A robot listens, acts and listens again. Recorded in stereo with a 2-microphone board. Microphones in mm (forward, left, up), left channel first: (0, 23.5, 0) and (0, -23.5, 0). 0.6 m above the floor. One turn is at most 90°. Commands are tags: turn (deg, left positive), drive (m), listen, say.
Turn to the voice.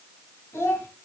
<turn deg="90"/>
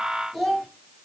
<say>Facing the child speaking.</say>